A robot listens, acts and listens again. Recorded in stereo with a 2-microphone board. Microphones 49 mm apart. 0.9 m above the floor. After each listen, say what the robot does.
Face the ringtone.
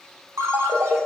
Turn 90° right.
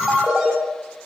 Turn 10° right.
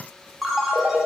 Found it: a ringtone, straight ahead, 1 to 2 m away.